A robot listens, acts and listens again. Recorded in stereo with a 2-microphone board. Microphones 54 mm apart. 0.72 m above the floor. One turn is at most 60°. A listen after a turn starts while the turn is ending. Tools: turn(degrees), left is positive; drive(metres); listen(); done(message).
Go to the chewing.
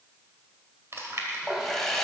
turn(degrees=-55)
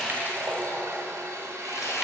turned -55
listen()
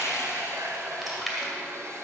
drive(metres=1.0)
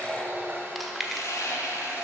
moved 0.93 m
drive(metres=1.0)
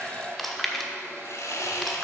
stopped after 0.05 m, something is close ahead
done("Arrived at the chewing, straight ahead.")